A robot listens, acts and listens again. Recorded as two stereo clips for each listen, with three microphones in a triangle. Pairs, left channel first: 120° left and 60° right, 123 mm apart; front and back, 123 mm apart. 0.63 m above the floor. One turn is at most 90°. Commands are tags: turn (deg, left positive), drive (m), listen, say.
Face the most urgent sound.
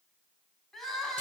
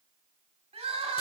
<turn deg="-90"/>
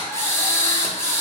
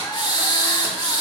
<turn deg="-65"/>
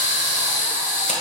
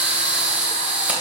<listen/>
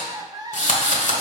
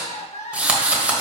<say>Facing the crying.</say>